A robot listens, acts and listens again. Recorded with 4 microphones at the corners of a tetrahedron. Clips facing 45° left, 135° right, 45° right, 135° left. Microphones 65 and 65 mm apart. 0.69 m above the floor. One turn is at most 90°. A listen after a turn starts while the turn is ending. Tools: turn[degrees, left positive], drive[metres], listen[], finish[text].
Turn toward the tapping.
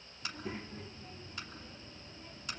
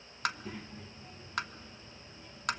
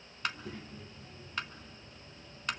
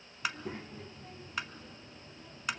Thought: The tapping: 140° right.
Action: turn[-90]
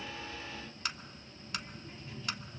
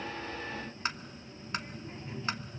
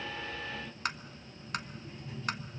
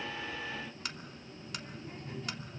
Thought: The tapping is now 80° right.
Action: turn[-80]
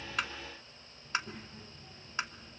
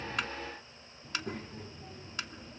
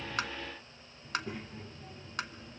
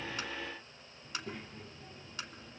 Thought: The tapping is now 15° right.
Action: turn[-15]
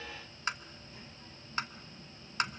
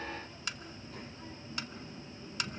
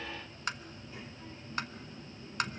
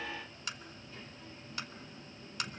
Action: finish[Facing the tapping, under 1 m away.]